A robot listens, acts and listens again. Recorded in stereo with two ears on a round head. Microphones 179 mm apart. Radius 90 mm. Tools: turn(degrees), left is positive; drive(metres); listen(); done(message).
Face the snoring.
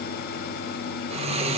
turn(degrees=-30)
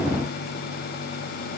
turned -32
listen()
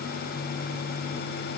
listen()
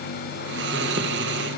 turn(degrees=-115)
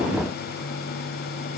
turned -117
listen()
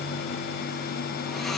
listen()
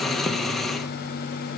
done("Found it: snoring, straight ahead.")